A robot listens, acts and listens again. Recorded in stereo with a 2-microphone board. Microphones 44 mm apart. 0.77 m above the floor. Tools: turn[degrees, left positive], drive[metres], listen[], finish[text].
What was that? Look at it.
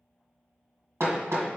Action: turn[-90]
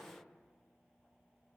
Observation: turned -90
Action: listen[]
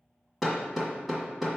Action: finish[Found it: hammering, straight ahead, 1 to 2 m away.]